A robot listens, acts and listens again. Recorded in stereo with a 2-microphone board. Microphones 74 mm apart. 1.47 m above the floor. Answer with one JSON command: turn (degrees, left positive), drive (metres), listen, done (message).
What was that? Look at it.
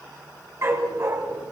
{"turn": -40}
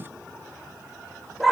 {"done": "Found it: a dog barking, straight ahead, over 4 m away."}